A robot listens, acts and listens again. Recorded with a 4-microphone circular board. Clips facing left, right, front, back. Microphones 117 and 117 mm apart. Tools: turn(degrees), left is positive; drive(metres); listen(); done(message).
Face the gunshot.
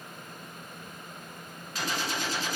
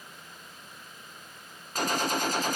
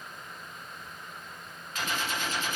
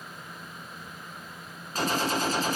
turn(degrees=-130)
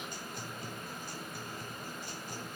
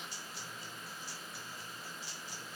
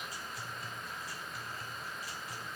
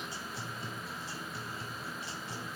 done("I heard a gunshot from this way, but can't make it out now.")